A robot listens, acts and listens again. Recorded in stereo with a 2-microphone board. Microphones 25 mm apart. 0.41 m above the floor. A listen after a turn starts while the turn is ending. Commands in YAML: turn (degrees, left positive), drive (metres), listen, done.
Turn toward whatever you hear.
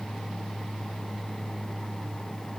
listen: true
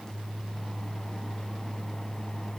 listen: true
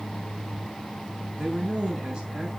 turn: -35
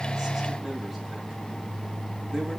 listen: true
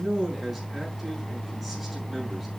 done: "Facing the man speaking, over 4 m away."